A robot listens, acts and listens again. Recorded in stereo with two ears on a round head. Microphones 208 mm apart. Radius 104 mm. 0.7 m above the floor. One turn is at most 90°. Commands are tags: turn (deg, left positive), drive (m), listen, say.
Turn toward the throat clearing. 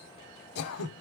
<turn deg="70"/>
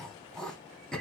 <say>Facing the throat clearing, under 1 m away.</say>